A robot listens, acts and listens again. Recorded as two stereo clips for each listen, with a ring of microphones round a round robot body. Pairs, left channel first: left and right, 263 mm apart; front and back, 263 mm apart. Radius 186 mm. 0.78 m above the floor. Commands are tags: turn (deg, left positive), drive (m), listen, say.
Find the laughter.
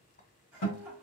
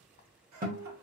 <turn deg="-175"/>
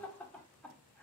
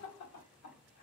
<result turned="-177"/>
<say>Facing the laughter.</say>